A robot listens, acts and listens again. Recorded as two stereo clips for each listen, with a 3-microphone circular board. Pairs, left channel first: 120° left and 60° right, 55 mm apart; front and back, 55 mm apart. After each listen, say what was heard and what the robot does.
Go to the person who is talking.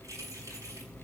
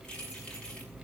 Keep listening.
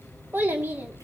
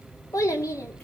Drive 1.0 m forward.
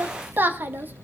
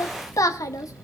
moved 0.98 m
Drive 1.0 m forward.
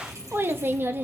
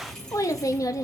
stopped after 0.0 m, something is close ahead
The child speaking is now 10° right. Turn 10° right.
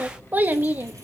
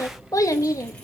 Arrived at the child speaking, straight ahead.